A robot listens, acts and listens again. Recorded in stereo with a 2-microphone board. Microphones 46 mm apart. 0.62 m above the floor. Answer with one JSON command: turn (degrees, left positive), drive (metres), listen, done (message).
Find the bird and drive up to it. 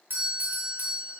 {"listen": true}
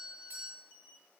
{"listen": true}
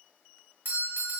{"done": "I can't make out a bird to turn to."}